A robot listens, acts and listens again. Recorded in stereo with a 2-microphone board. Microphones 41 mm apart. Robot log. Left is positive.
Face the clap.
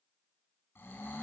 cmd idle
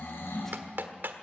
note: The clap: about 60° right or 120° right.
cmd yaw -60
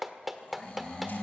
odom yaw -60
end: Found it: a clap, straight ahead.